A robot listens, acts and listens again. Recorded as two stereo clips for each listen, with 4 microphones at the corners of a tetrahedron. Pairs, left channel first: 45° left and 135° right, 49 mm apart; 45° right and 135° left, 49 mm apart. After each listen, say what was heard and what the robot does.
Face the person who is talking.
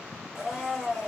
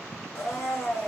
Keep listening.
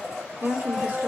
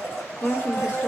The woman speaking: 95° right. Turn 95° right.
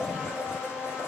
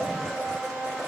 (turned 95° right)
Keep listening.
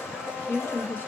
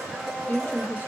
Found it: a woman speaking, straight ahead, under 1 m away.